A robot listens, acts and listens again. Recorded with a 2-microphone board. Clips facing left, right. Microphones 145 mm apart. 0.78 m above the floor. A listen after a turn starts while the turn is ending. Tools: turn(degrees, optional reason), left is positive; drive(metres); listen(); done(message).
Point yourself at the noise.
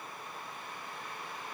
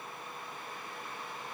listen()
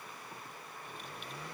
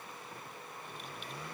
listen()
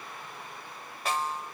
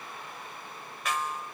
turn(degrees=35, reason="The snare drum: about 35° left or 145° left.")
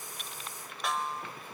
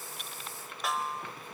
done("Facing the snare drum.")